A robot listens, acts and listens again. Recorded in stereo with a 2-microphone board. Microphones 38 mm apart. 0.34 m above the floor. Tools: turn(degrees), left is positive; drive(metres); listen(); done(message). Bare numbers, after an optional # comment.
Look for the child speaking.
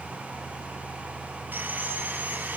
listen()
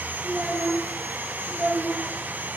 # The child speaking: about 30° right or 150° right.
turn(-30)
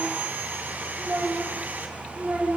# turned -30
# So it is at 125° right.
turn(-125)
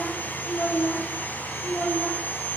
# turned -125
# The child speaking is now 15° left.
turn(15)
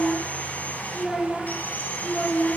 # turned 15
done("Found it: a child speaking, straight ahead, over 4 m away.")